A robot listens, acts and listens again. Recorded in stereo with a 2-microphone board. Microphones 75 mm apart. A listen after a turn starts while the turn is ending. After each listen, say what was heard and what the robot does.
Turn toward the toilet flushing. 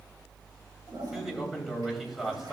The toilet flushing: about 70° right or 110° right. Turn 70° right.
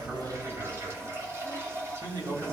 So it is at 40° right. Turn 40° right.
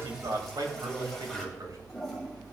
Found it: a toilet flushing, straight ahead, 2 to 4 m away.